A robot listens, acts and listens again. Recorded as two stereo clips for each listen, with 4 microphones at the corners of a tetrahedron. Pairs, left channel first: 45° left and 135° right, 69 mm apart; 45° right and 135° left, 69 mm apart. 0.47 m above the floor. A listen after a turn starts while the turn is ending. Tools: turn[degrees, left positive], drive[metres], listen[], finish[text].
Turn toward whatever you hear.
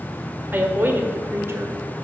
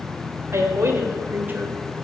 Thought: The woman speaking: 175° right.
Action: turn[-175]
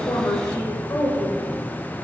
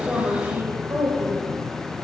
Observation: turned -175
Thought: The woman speaking is now 85° left.
Action: turn[85]
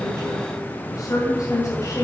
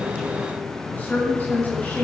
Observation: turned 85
Thought: The woman speaking is now 15° left.
Action: turn[15]
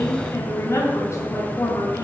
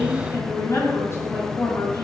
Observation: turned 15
Action: finish[Facing the woman speaking, 2 to 4 m away.]